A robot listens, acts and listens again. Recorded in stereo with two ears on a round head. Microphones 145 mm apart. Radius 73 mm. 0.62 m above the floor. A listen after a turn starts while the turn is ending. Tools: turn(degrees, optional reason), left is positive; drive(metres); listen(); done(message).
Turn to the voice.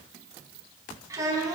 turn(degrees=-20, reason="The child speaking: about 20° right or 160° right.")
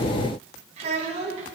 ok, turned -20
turn(degrees=-135, reason="So it is at 135° right.")
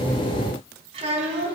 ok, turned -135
turn(degrees=-40, reason="The child speaking is now 40° right.")
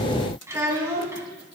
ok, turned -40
turn(degrees=-15, reason="The child speaking is now 15° right.")
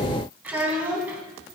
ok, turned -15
turn(degrees=-10, reason="The child speaking is now 10° right.")
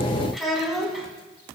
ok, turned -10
done("Found it: a child speaking, straight ahead, 2 to 4 m away.")